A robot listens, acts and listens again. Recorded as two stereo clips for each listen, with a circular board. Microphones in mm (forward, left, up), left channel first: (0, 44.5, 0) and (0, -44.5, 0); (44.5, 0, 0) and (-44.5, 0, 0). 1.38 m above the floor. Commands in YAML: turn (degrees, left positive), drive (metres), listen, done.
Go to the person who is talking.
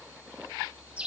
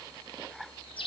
listen: true
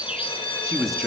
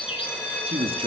turn: 180
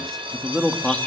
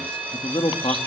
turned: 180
drive: 1.0
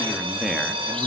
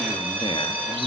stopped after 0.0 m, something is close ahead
done: "Blocked. The man speaking is further on, straight ahead."